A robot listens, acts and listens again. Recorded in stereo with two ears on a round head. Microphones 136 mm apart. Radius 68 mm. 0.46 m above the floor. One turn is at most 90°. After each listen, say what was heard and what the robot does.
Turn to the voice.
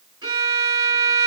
Keep listening.
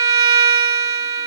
Keep listening.
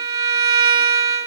I can't make out anyone speaking, only a violin.